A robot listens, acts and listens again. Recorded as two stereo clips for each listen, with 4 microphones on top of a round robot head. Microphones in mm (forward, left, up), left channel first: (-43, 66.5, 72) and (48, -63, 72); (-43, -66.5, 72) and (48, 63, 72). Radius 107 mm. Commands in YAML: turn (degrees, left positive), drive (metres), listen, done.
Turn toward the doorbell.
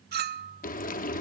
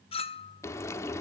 listen: true
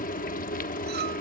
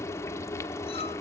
listen: true
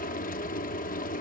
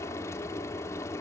done: "I can't make out a doorbell, only frying and a clink."